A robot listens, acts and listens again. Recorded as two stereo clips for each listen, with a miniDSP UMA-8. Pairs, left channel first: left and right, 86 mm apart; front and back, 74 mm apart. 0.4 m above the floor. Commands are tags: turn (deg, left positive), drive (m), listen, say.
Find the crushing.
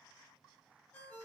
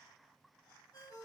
<listen/>
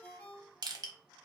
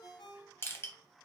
<turn deg="-55"/>
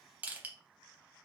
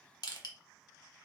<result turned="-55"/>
<turn deg="-20"/>
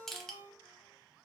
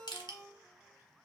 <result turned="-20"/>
<say>Facing the crushing, under 1 m away.</say>